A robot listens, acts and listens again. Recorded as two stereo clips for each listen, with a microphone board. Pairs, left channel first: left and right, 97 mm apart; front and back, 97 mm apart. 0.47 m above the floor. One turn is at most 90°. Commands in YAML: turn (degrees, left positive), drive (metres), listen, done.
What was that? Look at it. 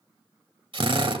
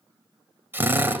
turn: -90
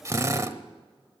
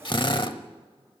turn: -30
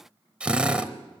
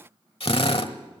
turn: -10
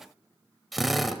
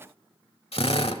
done: "Found it: a drill, straight ahead."